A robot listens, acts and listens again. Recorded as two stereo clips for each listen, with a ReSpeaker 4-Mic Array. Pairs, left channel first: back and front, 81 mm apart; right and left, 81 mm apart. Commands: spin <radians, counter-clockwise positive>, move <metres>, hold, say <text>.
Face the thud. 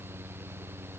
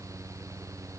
hold
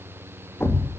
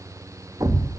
spin 2.18
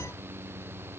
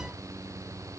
say I heard a thud from this way, but can't make it out now.